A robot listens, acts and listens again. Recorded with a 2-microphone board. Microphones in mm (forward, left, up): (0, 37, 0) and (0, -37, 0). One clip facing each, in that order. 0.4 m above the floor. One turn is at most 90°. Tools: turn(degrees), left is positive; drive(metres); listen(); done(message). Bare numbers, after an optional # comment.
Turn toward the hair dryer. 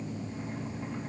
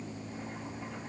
listen()
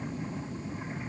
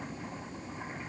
listen()
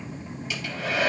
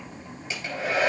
# The hair dryer: about 35° right or 145° right.
turn(-35)
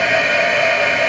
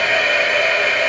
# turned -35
done("Found it: a hair dryer, straight ahead, over 4 m away.")